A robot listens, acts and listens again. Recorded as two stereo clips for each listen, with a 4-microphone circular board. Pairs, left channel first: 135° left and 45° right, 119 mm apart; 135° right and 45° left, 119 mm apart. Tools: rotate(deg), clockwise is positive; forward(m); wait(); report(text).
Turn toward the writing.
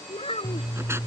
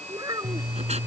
rotate(-25)
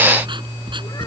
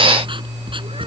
report("Found it: writing, straight ahead.")